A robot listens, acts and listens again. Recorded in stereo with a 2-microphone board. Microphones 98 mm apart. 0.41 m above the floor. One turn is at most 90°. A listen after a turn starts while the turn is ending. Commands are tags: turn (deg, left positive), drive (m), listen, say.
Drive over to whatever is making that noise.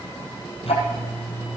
<turn deg="90"/>
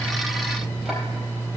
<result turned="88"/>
<drive m="1.0"/>
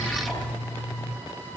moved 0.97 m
<drive m="1.0"/>
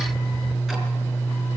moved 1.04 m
<drive m="1.0"/>
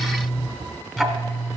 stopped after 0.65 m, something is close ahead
<say>I am next to the ticking.</say>